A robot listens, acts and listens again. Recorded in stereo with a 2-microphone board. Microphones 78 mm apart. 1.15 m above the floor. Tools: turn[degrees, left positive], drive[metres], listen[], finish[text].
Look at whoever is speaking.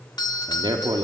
Thought: The man speaking: about 70° right or 110° right.
Action: turn[-70]
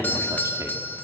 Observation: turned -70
Action: listen[]
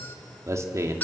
Thought: So it is at 40° right.
Action: turn[-40]
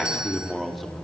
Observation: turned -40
Action: finish[Facing the man speaking, 2 to 4 m away.]